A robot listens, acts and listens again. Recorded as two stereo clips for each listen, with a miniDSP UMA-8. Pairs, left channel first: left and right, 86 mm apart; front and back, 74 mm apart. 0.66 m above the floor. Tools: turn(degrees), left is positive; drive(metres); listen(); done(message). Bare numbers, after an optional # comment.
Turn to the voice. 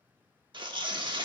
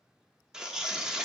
listen()
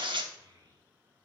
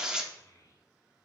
# The child speaking: 45° right.
turn(-45)
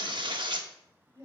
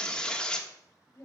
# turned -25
# The child speaking is now 45° right.
turn(-45)
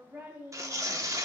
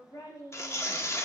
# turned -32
# The child speaking is now 25° right.
turn(-25)
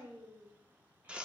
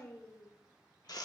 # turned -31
# The child speaking is now 20° right.
turn(-20)
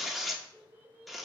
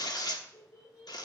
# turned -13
# The child speaking is now 20° right.
turn(-20)
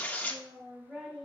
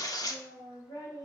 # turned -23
done("Found it: a child speaking, straight ahead.")